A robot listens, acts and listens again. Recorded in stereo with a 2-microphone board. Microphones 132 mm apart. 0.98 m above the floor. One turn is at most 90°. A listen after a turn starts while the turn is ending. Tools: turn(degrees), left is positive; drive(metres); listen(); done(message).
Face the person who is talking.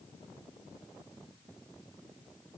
listen()
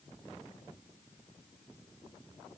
listen()
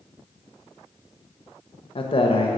turn(degrees=45)
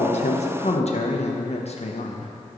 turn(degrees=80)
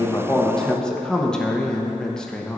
done("Found it: a man speaking, straight ahead, under 1 m away.")